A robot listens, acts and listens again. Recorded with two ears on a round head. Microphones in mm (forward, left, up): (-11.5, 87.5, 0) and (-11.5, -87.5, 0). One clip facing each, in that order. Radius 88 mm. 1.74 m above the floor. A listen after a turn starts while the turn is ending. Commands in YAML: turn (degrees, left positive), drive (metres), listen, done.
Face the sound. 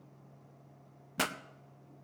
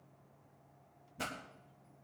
turn: 90
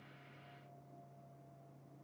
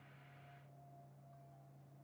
done: "I heard a pop from this way, but can't make it out now."